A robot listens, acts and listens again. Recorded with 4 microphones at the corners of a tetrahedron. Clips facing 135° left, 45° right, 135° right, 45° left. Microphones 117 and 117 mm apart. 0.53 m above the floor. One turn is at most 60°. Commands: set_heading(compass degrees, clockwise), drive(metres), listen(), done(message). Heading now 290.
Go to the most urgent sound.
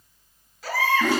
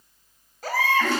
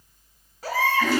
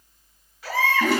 set_heading(350)
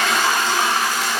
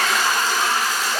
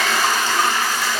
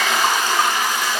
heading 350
set_heading(15)
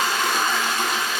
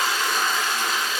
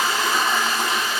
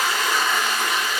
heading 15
listen()
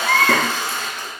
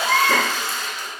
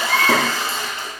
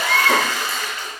set_heading(0)
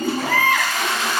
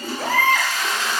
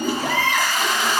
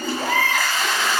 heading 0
drive(1.0)
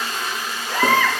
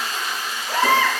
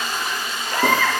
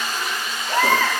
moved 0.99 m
set_heading(345)
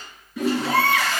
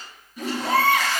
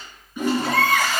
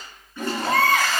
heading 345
drive(1.0)
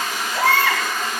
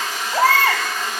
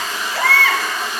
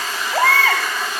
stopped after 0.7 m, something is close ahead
done("I am next to the baby crying.")